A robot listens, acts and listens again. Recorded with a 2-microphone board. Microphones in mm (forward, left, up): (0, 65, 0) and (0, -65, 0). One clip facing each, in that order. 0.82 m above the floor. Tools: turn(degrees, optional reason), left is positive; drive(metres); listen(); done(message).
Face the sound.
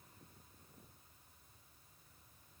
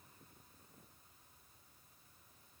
listen()
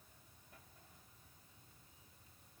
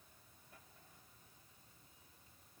listen()
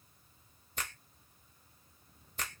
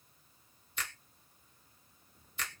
turn(degrees=50, reason="The finger snap: about 50° left or 130° left.")
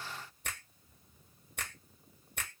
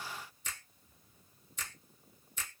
turn(degrees=80, reason="So it is at 80° left.")
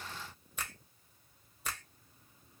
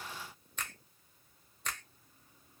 turn(degrees=10, reason="The finger snap is now 10° left.")
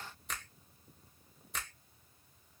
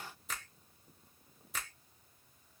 done("Found it: a finger snap, straight ahead.")